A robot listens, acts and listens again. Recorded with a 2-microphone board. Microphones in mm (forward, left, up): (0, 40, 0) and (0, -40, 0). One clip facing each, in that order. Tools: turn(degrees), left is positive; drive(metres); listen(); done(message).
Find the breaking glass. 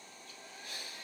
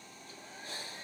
listen()
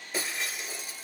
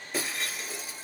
turn(degrees=30)
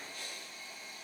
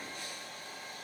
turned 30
listen()
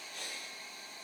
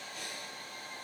done("I heard breaking glass, but can't make it out now. It was about 30° right or 150° left.")